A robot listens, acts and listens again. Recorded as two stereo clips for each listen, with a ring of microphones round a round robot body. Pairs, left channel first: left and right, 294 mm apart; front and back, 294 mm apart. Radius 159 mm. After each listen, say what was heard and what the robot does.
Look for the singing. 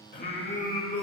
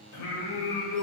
The singing: 30° left. Turn 30° left.
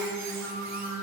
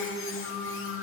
Found it: singing, straight ahead.